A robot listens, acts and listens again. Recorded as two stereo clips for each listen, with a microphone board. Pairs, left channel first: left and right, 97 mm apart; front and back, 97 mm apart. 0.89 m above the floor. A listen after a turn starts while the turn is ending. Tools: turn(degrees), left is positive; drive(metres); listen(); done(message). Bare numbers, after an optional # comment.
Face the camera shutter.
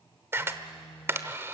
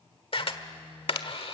# The camera shutter: 25° right.
turn(-25)
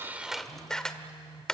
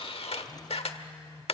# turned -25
done("Facing the camera shutter.")